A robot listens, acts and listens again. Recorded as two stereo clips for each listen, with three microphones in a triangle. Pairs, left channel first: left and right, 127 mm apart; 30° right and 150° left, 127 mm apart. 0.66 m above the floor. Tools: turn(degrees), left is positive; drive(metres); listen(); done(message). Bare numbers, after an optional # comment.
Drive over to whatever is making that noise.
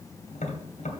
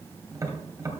# The tapping: 85° left.
turn(85)
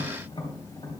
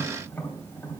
# The tapping is now 45° left.
turn(45)
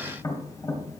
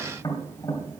# The tapping is now 30° left.
turn(30)
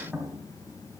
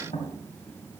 drive(1.0)
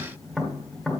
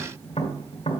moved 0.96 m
drive(1.0)
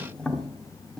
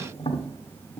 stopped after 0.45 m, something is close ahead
done("Arrived at the tapping, straight ahead.")